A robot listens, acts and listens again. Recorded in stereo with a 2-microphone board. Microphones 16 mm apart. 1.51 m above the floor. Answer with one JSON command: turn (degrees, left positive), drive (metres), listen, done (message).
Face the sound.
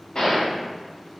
{"turn": 50}
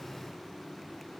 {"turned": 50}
{"listen": true}
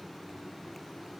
{"done": "I heard a gunshot, but can't make it out now. It was about straight ahead or 80° left."}